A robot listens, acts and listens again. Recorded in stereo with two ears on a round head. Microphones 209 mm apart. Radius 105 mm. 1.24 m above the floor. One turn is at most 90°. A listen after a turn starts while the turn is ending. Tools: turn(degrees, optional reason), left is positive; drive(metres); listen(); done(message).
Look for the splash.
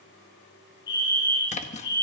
turn(degrees=30, reason="The splash: about 30° left or 150° left.")
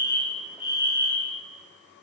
listen()
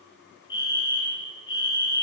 done("I heard a splash, but can't make it out now. It was about straight ahead or 120° left.")